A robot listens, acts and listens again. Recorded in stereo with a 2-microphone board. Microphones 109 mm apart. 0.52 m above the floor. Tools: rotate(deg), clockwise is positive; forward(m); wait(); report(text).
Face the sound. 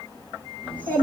rotate(-30)
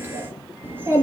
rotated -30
rotate(20)
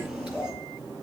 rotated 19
report("Facing the child speaking.")